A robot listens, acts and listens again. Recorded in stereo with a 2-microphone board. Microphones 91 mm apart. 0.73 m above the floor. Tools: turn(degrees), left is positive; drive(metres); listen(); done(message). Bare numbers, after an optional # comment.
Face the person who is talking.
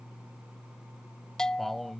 turn(30)
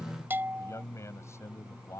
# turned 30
# So it is at 150° left.
turn(150)
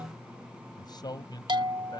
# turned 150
# The man speaking is now 50° left.
turn(50)
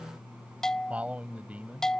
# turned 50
# The man speaking is now 15° right.
turn(-15)
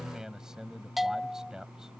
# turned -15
done("Facing the man speaking.")